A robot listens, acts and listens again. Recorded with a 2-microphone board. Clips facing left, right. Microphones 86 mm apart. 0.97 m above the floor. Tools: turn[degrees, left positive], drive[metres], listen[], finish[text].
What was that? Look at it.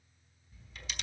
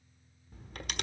Thought: The camera shutter: about 55° right or 125° right.
Action: turn[-55]
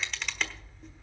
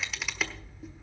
Action: finish[Found it: a camera shutter, straight ahead.]